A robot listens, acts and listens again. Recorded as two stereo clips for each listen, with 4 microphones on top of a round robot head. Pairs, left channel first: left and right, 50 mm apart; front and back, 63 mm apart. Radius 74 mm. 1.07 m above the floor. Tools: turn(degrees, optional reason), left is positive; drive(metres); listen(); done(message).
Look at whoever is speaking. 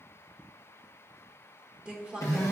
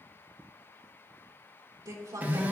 turn(degrees=-160, reason="The woman speaking: 160° right.")
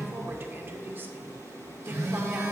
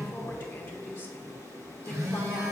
turn(degrees=-50, reason="The woman speaking is now 50° right.")
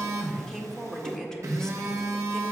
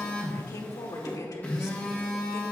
turn(degrees=10, reason="The woman speaking is now 10° left.")
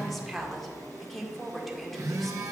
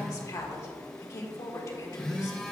done("Facing the woman speaking, 1 to 2 m away.")